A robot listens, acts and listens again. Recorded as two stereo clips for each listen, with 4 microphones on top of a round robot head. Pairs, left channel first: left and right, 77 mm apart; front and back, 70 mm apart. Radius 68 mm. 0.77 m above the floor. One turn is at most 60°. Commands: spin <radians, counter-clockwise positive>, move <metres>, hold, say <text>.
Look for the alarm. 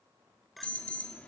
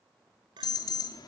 spin 0.26
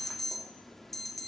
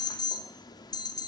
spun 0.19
say Found it: an alarm, straight ahead.